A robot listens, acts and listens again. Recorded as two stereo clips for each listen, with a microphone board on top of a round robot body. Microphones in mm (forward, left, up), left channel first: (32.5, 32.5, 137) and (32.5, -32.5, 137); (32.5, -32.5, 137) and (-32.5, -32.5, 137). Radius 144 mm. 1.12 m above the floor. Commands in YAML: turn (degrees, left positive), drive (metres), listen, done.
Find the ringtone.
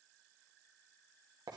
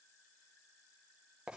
listen: true
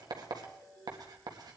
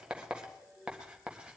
turn: 55
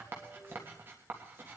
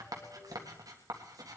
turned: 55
listen: true
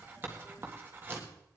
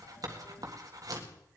listen: true
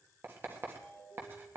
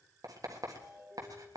turn: 10
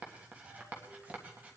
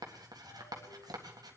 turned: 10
listen: true
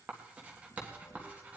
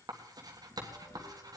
listen: true
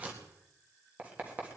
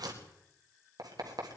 done: "Facing where the ringtone came from. I can't hear it now."